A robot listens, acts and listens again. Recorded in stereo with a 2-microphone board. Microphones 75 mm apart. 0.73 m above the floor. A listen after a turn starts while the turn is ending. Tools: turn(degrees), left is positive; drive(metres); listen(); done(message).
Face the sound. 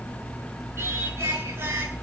turn(degrees=-30)
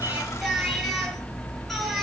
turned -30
done("Facing the singing.")